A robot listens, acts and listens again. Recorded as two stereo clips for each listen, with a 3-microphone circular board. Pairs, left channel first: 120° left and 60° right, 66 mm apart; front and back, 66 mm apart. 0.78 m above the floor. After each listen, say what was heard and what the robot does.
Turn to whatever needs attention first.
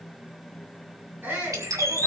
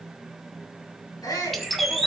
Found it: a shout, straight ahead.